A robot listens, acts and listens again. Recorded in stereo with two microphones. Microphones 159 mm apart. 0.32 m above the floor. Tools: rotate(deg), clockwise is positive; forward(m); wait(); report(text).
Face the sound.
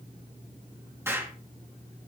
rotate(15)
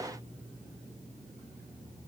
wait()
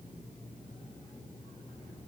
report("I heard an explosion, but can't make it out now. It was about straight ahead or 150° right.")